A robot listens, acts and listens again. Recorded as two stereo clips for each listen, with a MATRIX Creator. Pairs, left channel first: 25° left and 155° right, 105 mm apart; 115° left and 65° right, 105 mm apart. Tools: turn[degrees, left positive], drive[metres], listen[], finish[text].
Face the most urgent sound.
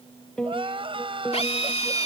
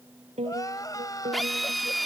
Thought: The crying: 170° left.
Action: turn[170]
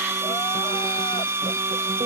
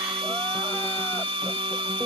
Action: listen[]
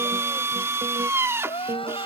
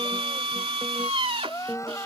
Thought: The crying is now 50° left.
Action: turn[50]
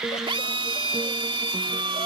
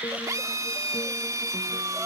Action: listen[]
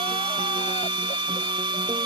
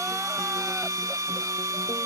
Action: listen[]
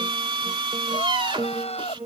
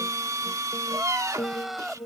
Thought: The crying is now 20° left.
Action: turn[20]
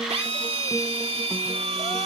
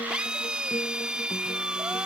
Action: listen[]
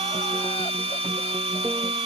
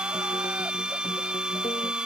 Action: listen[]
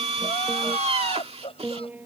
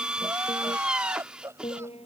Action: finish[Found it: crying, straight ahead.]